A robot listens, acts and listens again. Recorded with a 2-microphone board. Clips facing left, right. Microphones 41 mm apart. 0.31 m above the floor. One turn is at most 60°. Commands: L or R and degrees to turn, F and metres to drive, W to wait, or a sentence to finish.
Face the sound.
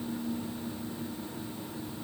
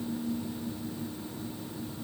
W
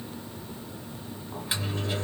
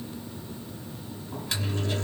L15
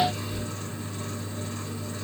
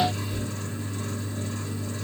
Facing the microwave.